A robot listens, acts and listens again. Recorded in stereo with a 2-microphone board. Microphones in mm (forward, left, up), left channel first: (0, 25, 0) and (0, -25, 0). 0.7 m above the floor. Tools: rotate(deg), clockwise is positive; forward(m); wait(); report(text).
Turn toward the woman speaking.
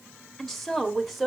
rotate(30)
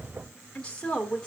rotate(-15)
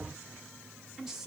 rotate(10)
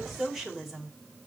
report("Found it: a woman speaking, straight ahead.")